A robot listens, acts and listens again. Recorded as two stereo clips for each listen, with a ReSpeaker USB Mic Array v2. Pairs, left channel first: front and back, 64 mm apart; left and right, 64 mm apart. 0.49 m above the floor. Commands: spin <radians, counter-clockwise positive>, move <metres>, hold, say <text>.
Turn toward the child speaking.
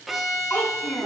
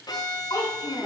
spin 1.05
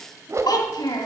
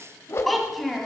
say Found it: a child speaking, straight ahead.